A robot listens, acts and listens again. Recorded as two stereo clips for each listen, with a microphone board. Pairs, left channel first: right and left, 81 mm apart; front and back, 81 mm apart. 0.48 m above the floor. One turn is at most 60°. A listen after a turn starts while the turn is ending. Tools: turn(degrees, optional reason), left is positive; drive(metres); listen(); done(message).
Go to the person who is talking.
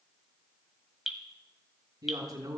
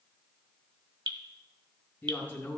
turn(degrees=60, reason="The man speaking: 65° left.")
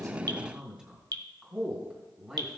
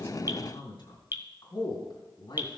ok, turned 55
turn(degrees=10, reason="The man speaking is now 10° left.")
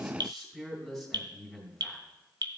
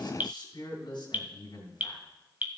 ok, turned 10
drive(metres=1.0)
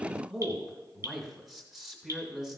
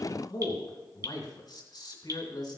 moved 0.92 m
drive(metres=1.0)
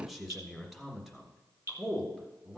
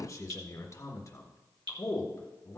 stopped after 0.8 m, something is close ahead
done("I am next to the man speaking.")